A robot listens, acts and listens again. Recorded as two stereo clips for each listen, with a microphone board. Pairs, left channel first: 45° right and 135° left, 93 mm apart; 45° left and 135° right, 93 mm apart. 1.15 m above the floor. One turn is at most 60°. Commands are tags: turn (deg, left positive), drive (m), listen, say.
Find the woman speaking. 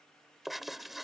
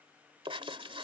<listen/>
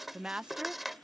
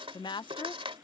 <turn deg="60"/>
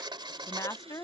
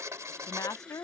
<say>Facing the woman speaking.</say>